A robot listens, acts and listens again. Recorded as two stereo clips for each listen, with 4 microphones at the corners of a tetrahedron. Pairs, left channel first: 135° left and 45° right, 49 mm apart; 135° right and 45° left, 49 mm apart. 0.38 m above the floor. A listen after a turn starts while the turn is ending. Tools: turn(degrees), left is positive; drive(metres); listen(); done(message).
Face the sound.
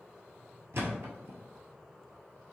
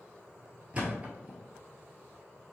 turn(degrees=-15)
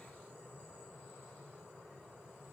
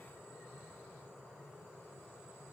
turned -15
done("Facing where the thud came from. I can't hear it now.")